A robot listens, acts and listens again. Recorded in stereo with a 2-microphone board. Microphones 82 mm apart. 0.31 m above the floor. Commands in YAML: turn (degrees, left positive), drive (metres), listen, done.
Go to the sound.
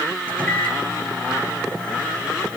turn: 15
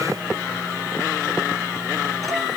listen: true
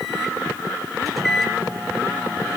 drive: 1.0
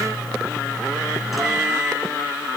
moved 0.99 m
drive: 1.0
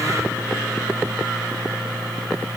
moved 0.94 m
drive: 1.0
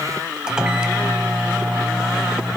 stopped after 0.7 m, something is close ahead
turn: -10
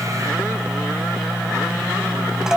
done: "I am next to the microwave."